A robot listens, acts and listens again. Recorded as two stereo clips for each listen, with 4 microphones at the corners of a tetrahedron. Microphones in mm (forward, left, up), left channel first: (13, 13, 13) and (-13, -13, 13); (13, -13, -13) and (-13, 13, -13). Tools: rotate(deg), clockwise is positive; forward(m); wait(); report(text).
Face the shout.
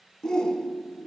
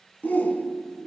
rotate(25)
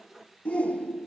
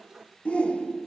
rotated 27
report("Found it: a shout, straight ahead, 1 to 2 m away.")